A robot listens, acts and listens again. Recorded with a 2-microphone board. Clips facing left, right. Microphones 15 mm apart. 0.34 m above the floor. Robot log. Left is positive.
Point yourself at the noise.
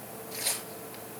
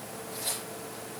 note: The tearing paper: about 65° left or 115° left.
cmd yaw +65
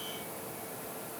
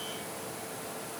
cmd idle
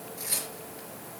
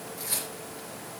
end: Facing the tearing paper.